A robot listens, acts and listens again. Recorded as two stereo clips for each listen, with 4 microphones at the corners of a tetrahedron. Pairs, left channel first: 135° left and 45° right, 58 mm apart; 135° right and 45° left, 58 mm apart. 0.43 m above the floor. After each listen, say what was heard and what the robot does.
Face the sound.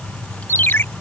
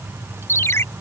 The ringtone: 175° right. Turn 175° right.
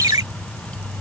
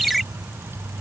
The ringtone is now 45° right. Turn 45° right.
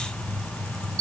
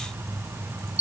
The ringtone is now 20° right. Turn 20° right.
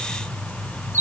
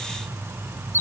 Facing the ringtone.